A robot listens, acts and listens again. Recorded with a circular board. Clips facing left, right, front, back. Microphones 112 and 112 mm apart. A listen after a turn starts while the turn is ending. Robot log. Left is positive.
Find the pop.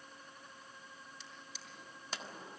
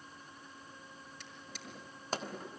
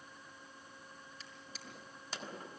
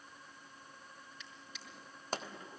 note: The pop: 135° right.
cmd yaw -135
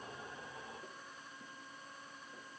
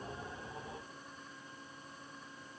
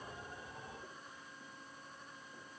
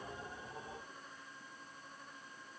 end: I heard a pop from this way, but can't make it out now.